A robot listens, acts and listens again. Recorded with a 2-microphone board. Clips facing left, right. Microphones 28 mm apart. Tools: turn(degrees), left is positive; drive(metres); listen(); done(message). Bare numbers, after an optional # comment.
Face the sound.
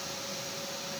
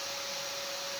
listen()
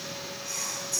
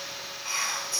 # The whispering: about 45° right or 135° right.
turn(-45)
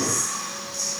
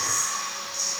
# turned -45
# So it is at 10° right.
turn(-10)
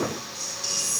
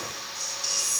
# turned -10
done("Facing the whispering, 2 to 4 m away.")